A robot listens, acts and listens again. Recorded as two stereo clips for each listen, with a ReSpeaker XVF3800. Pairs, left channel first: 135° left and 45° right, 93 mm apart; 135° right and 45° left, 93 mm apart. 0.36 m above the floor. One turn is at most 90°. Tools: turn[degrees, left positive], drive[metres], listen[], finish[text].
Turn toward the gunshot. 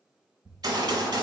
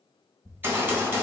Thought: The gunshot: 20° right.
Action: turn[-20]
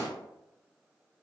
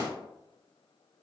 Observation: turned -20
Action: finish[Found it: a gunshot, straight ahead, under 1 m away.]